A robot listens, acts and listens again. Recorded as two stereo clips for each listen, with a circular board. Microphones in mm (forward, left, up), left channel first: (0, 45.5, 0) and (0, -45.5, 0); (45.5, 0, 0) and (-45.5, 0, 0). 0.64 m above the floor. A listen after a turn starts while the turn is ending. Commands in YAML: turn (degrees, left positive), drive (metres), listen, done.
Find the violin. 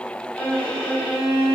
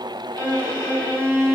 turn: 10
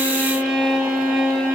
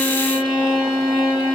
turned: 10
done: "Found it: a violin, straight ahead, 1 to 2 m away."